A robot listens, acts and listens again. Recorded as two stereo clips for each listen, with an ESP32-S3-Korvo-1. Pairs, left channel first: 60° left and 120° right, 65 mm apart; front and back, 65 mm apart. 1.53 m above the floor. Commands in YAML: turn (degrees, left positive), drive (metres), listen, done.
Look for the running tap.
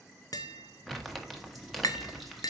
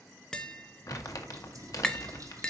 turn: 150
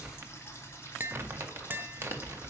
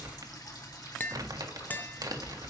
turn: 10
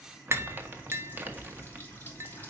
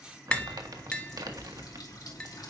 done: "Found it: a running tap, straight ahead."